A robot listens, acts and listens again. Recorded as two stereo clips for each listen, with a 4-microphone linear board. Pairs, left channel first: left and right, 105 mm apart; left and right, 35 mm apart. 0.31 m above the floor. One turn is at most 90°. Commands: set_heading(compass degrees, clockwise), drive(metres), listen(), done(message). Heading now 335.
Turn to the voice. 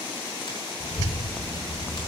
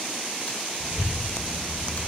set_heading(270)
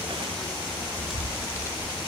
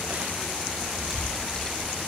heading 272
set_heading(242)
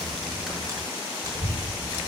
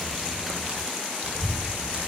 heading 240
done("Found it: a child speaking, straight ahead.")